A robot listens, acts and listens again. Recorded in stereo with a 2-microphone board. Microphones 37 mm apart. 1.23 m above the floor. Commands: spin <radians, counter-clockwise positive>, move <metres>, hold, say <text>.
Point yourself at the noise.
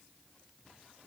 hold
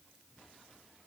hold
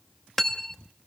spin 0.52
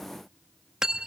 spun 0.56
spin -0.35
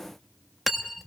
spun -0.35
say Facing the cutlery clinking.